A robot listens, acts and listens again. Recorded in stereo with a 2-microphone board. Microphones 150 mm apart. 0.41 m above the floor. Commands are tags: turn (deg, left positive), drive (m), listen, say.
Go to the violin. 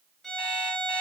<turn deg="30"/>
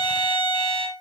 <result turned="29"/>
<turn deg="150"/>
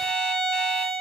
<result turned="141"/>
<turn deg="10"/>
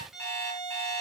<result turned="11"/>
<drive m="1.0"/>
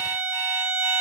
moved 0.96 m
<turn deg="-10"/>
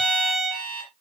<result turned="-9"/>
<drive m="1.0"/>
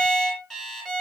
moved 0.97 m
<drive m="1.0"/>
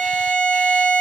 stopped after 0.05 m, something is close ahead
<say>I am next to the violin.</say>